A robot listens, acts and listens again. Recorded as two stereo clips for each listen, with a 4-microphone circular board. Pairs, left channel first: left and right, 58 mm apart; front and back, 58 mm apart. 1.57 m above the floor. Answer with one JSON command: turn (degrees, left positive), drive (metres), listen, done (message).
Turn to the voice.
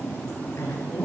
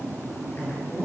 {"turn": 50}
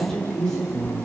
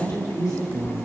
{"turn": 10}
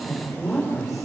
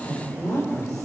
{"done": "Found it: a woman speaking, straight ahead, over 4 m away."}